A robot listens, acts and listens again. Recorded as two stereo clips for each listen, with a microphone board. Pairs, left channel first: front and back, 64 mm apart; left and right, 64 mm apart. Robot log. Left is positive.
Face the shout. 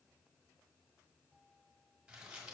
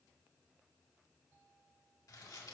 cmd idle
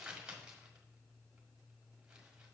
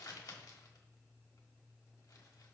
cmd idle
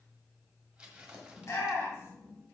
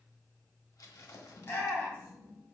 note: The shout: 40° left.
cmd yaw +40
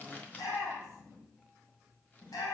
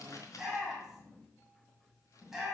end: Found it: a shout, straight ahead.